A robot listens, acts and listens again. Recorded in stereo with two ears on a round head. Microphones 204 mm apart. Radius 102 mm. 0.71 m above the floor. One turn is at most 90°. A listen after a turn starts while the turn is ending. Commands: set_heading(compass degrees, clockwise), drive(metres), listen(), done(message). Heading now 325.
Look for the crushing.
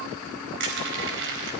set_heading(20)
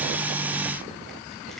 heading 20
listen()
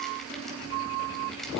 listen()
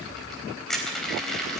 done("Found it: crushing, straight ahead, 2 to 4 m away.")